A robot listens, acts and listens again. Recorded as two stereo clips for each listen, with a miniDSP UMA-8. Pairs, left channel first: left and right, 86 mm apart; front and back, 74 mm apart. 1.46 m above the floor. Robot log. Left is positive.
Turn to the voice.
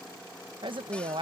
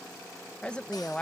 note: The woman speaking: 75° right.
cmd yaw -75
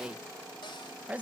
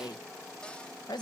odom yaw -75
note: The woman speaking is now 15° right.
cmd yaw -15
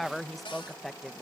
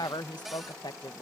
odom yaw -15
end: Found it: a woman speaking, straight ahead.